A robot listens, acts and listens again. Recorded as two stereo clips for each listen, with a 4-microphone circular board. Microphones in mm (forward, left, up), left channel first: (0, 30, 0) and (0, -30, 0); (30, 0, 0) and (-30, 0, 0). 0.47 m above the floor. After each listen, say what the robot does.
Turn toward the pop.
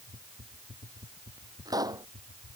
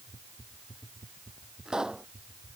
Turn 100° right.
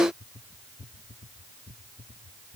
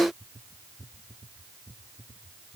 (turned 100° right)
I heard a pop from this way, but can't make it out now.